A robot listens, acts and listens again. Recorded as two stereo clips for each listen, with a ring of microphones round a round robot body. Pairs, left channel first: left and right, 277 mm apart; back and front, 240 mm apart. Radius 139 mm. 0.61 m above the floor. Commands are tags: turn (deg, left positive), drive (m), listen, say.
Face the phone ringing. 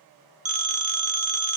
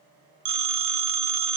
<turn deg="-25"/>
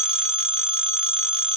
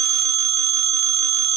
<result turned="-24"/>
<say>Found it: a phone ringing, straight ahead.</say>